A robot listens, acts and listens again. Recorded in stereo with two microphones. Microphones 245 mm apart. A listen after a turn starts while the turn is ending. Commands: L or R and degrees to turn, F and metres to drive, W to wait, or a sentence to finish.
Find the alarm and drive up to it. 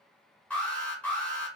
L30
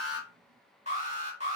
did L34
R25
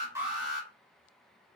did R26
F1.0
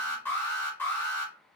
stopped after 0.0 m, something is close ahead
L10
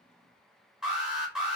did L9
Something is in my way. I am facing the alarm but have not reached it.